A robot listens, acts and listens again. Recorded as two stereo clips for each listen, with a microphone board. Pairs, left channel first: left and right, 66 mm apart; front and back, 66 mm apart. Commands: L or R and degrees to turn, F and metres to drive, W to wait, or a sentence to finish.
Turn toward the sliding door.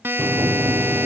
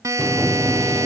R100
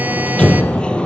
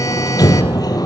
L15
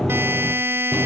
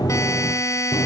Found it: a sliding door, straight ahead, 1 to 2 m away.